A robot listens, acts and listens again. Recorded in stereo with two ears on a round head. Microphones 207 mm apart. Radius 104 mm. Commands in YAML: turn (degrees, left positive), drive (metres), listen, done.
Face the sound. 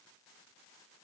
listen: true
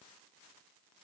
listen: true
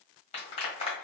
turn: 25
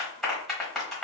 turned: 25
done: "Found it: a clap, straight ahead, 1 to 2 m away."